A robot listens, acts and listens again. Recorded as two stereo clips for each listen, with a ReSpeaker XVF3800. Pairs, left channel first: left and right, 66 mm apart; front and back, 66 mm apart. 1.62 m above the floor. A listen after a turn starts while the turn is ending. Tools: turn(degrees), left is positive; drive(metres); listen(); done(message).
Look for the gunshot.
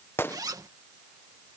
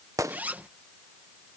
turn(degrees=145)
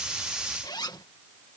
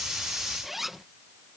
done("Facing where the gunshot came from. I can't hear it now.")